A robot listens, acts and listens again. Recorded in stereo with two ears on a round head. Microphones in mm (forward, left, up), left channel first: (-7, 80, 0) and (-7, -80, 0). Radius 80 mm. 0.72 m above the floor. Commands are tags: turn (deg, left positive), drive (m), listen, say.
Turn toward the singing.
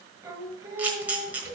<turn deg="-20"/>
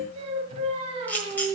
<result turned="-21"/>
<turn deg="-140"/>
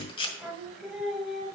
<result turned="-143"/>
<say>Found it: singing, straight ahead.</say>